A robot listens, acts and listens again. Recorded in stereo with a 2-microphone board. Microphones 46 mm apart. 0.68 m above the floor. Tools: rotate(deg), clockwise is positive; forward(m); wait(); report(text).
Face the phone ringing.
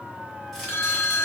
rotate(-65)
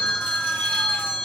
rotate(-25)
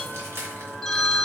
rotate(-15)
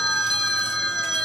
report("Facing the phone ringing.")